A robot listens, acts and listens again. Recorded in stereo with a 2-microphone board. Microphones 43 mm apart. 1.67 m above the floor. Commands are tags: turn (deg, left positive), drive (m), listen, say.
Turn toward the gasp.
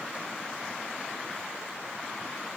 <listen/>
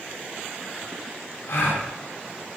<turn deg="90"/>
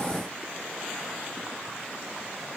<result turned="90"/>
<say>I heard a gasp from this way, but can't make it out now.</say>